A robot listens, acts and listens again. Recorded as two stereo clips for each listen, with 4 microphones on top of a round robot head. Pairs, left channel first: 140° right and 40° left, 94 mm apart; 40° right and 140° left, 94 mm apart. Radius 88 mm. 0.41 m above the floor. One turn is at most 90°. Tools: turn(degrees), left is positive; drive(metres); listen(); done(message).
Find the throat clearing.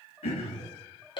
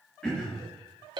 turn(degrees=-90)
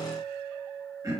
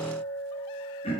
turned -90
turn(degrees=-15)
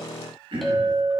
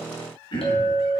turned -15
done("Found it: throat clearing, straight ahead.")